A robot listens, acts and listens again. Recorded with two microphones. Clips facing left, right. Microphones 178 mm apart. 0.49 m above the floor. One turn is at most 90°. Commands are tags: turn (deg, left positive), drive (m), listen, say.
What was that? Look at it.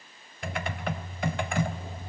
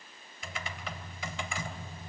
<turn deg="60"/>
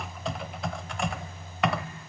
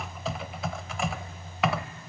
<say>Found it: typing on a keyboard, straight ahead, under 1 m away.</say>